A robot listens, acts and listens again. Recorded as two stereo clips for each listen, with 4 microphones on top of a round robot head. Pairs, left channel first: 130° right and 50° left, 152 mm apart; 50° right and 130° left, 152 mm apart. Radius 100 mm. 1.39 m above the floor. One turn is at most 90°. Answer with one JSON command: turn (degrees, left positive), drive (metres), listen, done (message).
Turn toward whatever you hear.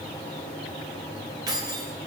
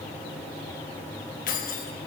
{"turn": -15}
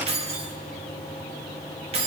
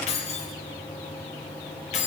{"done": "Facing the keys jangling."}